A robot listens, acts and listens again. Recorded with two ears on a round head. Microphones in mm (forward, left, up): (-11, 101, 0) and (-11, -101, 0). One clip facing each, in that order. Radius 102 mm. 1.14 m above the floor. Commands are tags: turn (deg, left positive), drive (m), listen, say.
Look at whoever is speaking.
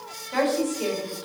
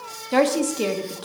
<turn deg="-60"/>
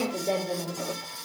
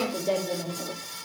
<say>Facing the woman speaking, 1 to 2 m away.</say>